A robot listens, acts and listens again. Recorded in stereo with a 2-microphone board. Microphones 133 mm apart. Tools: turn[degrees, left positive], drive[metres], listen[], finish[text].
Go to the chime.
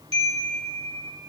Thought: The chime: about 50° right or 130° right.
Action: turn[-50]
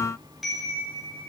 Action: drive[1.0]
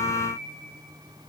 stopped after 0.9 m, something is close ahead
Action: finish[Blocked. The chime is further on, straight ahead.]